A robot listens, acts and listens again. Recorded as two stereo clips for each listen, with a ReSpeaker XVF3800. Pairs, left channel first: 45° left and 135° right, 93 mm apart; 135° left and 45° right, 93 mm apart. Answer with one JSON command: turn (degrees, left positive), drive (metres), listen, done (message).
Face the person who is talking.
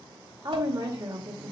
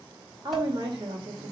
{"turn": -90}
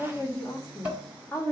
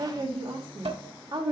{"turn": -10}
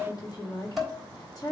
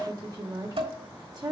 {"done": "Found it: a woman speaking, straight ahead."}